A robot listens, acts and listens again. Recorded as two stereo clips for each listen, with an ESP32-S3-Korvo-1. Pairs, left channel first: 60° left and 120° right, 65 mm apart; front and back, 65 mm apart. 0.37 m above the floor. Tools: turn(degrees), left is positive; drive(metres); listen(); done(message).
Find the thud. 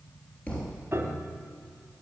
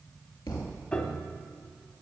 turn(degrees=-10)
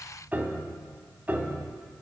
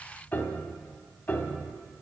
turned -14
done("Facing where the thud came from. I can't hear it now.")